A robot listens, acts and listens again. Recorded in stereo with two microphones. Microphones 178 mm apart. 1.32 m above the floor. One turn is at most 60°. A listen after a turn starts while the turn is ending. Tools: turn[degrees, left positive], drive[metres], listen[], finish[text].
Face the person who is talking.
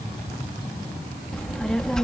Action: turn[30]
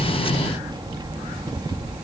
Thought: So it is at 25° right.
Action: turn[-25]
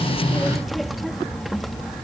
Action: finish[Facing the child speaking.]